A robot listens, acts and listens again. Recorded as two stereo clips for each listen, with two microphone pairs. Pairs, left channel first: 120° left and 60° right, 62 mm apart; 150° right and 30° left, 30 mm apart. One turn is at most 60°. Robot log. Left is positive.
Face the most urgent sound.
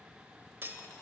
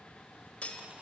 cmd idle
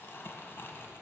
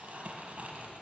cmd idle
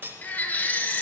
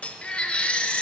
note: The baby crying: 175° left.
cmd yaw +60
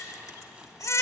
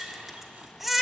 note: The baby crying is now 115° left.
cmd yaw +60
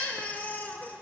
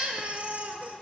note: The baby crying is now 60° left.
cmd yaw +60
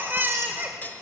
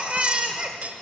note: The baby crying is now 10° right.
cmd yaw -10
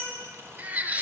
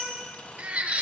end: Found it: a baby crying, straight ahead.